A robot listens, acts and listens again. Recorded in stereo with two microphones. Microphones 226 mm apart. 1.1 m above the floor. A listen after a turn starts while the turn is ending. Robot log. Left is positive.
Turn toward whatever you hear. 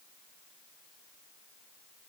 cmd idle
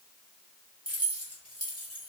cmd yaw +90
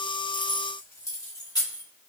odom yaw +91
note: So it is at 20° left.
cmd yaw +20
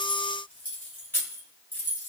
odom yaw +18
note: The keys jangling is now 10° left.
cmd yaw +10
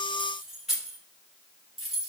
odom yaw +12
end: Found it: keys jangling, straight ahead.